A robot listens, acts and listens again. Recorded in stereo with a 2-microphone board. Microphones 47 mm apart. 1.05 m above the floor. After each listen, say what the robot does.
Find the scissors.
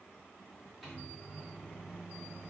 Keep listening.
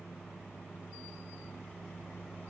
Keep listening.
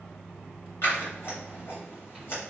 Turn 50° left.
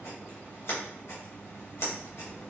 Turn 80° left.
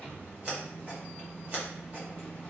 Turn 25° right.
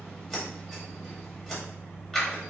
Turn 15° left.
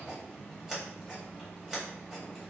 Facing the scissors.